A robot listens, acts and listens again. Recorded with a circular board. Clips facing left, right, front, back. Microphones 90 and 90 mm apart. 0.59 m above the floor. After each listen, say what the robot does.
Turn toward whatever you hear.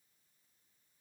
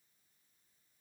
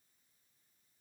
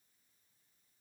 Keep listening.
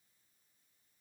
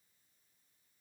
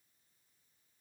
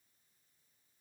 Keep listening.
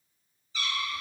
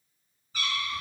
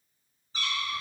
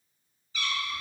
Turn 55° right.
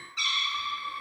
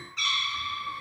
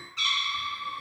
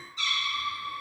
Facing the cat meowing.